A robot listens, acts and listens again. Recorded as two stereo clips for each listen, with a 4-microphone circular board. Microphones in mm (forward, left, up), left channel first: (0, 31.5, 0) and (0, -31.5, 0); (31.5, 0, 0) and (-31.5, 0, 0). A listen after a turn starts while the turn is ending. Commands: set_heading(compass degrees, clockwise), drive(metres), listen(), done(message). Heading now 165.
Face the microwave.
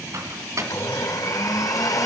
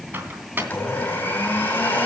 set_heading(285)
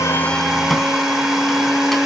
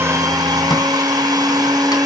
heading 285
listen()
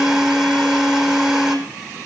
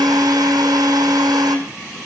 listen()
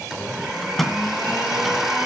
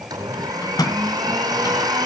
done("Facing the microwave, 2 to 4 m away.")